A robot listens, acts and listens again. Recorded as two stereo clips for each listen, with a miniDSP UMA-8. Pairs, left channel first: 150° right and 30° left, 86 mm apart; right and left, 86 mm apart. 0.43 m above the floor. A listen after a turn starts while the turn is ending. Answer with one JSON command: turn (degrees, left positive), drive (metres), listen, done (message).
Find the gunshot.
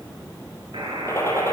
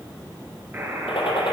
{"turn": -90}
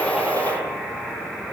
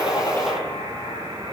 {"done": "Facing the gunshot."}